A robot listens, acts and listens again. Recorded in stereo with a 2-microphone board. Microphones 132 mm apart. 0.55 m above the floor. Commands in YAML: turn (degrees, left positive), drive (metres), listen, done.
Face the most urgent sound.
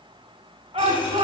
turn: -45
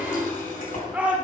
turn: -10
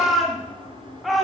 done: "Facing the shout, 1 to 2 m away."